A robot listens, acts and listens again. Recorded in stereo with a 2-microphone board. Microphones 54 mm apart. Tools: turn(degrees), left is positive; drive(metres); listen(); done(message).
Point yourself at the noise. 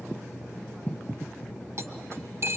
turn(degrees=-55)
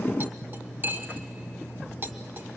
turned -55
turn(degrees=-50)
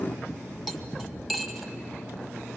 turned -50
done("Facing the cutlery clinking, 1 to 2 m away.")